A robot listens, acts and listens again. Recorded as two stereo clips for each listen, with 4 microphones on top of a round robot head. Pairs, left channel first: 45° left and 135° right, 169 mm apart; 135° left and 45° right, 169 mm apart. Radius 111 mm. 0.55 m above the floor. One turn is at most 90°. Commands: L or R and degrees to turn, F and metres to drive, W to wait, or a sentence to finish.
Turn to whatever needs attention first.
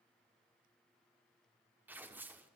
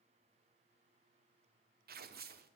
W
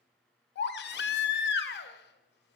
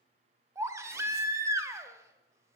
L30
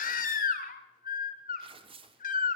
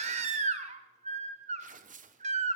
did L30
Found it: a baby crying, straight ahead.